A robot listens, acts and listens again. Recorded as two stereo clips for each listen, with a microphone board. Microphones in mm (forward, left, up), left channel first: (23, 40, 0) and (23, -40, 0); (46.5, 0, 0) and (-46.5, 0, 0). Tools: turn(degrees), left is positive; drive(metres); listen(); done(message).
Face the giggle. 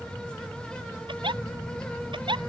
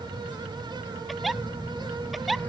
turn(degrees=-90)
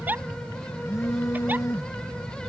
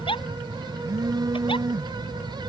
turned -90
turn(degrees=-20)
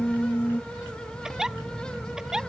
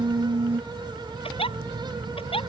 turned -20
done("Found it: a giggle, straight ahead.")